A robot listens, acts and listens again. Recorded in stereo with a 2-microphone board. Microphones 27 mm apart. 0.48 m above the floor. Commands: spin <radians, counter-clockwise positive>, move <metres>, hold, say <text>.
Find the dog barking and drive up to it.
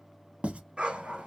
spin -0.70
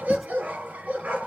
spin -1.75
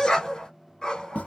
spin 0.35
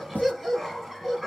move 1.0
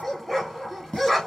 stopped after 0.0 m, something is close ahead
say Blocked. The dog barking is further on, straight ahead.